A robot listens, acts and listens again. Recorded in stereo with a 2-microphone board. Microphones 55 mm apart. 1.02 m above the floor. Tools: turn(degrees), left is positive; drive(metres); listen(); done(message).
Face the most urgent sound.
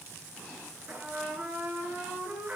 listen()
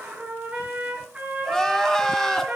turn(degrees=30)
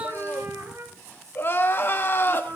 turn(degrees=140)
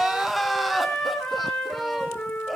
done("Found it: crying, straight ahead, 1 to 2 m away.")